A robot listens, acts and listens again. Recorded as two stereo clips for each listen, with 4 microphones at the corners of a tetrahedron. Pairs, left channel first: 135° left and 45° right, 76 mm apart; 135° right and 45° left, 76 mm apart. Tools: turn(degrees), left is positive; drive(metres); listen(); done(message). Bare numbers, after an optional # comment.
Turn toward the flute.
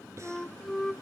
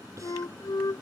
# The flute: 140° right.
turn(-140)
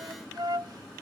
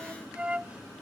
# The flute is now 25° right.
turn(-25)
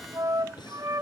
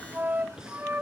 # The flute is now 20° right.
turn(-20)
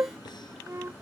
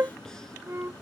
done("Facing the flute.")